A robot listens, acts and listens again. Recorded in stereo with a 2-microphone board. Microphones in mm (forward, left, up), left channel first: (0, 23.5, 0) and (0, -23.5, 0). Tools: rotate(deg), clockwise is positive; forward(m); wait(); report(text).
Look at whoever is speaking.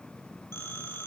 wait()
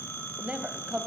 rotate(20)
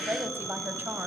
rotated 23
rotate(135)
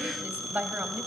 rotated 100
rotate(35)
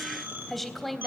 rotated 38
report("Found it: a woman speaking, straight ahead.")